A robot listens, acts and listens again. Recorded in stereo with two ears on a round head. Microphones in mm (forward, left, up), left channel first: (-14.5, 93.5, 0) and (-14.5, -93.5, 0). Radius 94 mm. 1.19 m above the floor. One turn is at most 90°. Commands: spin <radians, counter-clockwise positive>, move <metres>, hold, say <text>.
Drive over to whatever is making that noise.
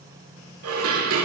spin -1.57
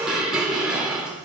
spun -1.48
move 1.0
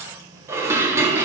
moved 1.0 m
spin -0.26
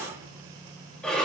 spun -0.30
move 1.0
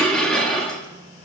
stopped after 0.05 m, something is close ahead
say Arrived at the dishes clattering, straight ahead.